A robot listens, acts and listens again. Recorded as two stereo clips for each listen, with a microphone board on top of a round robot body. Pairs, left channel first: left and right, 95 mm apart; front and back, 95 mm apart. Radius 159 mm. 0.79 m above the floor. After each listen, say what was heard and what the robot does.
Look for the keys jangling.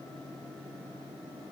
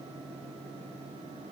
Keep listening.
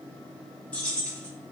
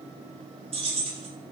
The keys jangling: 170° left. Turn 170° left.
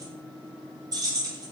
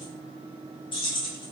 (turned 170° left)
The keys jangling is now 35° right. Turn 35° right.
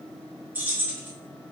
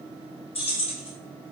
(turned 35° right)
The keys jangling is now 20° right. Turn 20° right.
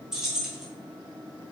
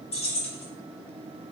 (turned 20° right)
Facing the keys jangling, under 1 m away.